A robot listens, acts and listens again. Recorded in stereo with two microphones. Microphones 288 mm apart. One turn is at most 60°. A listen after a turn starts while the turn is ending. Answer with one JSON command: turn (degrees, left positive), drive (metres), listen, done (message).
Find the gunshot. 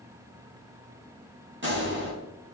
{"turn": -40}
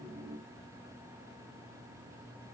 {"listen": true}
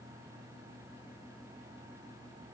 {"done": "I heard a gunshot, but can't make it out now. It was about straight ahead or 100° right."}